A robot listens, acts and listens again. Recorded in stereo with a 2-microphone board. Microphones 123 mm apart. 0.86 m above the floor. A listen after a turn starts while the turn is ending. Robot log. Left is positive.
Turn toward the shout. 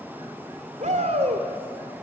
note: The shout: about 70° right or 110° right.
cmd yaw -70
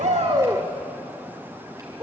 note: So it is at 30° right.
cmd yaw -30
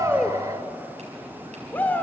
note: The shout is now 15° left.
cmd yaw +15
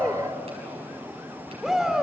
end: Found it: a shout, straight ahead.